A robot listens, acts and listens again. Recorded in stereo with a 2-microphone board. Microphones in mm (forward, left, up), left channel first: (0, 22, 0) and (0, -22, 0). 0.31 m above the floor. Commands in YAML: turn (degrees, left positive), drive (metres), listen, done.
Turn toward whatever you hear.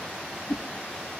turn: 55
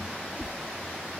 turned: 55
done: "Facing the whoosh."